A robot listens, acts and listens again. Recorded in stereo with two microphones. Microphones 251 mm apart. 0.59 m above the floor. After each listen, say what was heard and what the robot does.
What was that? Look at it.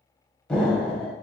Turn 30° left.
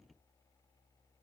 Keep listening.
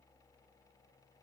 I heard an explosion, but can't make it out now. It was about 25° right or 145° left.